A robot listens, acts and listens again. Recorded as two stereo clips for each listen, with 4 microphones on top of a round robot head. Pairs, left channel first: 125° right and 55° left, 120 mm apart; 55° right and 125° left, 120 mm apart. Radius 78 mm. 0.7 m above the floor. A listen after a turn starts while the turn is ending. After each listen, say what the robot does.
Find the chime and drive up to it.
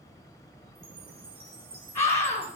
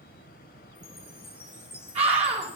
Turn 15° left.
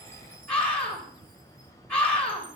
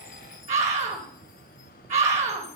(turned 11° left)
Keep listening.
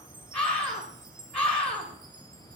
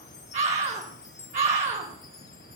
Drive 1.0 m forward.
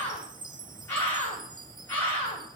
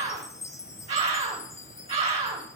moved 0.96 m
Turn 10° left.
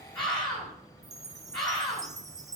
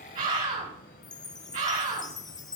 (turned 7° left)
Drive 1.0 m forward.
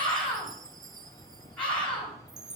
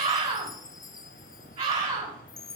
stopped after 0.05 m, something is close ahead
Arrived at the chime, straight ahead.